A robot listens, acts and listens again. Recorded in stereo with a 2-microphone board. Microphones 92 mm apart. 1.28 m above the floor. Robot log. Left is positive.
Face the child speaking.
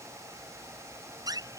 cmd idle
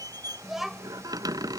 cmd yaw +30
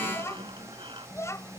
note: So it is at 145° left.
cmd yaw +145
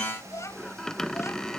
note: The child speaking is now 30° left.
cmd yaw +30
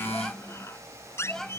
end: Facing the child speaking.